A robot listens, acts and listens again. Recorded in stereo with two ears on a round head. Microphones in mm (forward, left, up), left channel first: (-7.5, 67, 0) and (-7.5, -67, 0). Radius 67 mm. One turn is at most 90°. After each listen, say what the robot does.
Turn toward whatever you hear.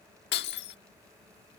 Turn 90° left.
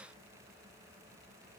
Facing where the breaking glass came from. I can't hear it now.